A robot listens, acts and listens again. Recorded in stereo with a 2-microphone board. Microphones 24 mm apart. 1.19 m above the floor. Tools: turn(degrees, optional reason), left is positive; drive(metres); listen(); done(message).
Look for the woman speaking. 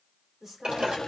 turn(degrees=-20, reason="The woman speaking: about 20° right or 160° right.")
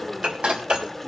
listen()
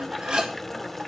listen()
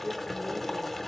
done("I heard a woman speaking, but can't make it out now. It was about straight ahead or 140° right.")